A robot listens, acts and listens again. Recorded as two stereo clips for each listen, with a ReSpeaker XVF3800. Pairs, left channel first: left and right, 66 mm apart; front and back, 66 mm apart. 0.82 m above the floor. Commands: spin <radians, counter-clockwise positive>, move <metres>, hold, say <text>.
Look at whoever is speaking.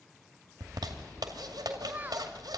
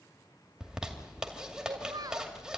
spin -2.62
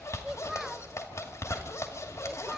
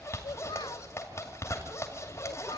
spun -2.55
say Found it: a child speaking, straight ahead, under 1 m away.